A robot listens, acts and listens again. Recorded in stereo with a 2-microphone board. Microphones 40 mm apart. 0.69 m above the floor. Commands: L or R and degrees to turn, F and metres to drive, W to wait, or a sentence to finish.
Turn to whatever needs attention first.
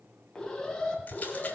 L30
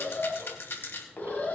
L135
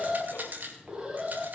R15
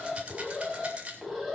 Found it: an alarm, straight ahead.